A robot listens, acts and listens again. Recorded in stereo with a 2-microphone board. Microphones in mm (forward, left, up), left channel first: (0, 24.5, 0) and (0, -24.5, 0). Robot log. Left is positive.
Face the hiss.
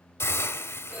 note: The hiss: about 70° left or 110° left.
cmd yaw +70
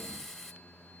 end: Facing the hiss, 1 to 2 m away.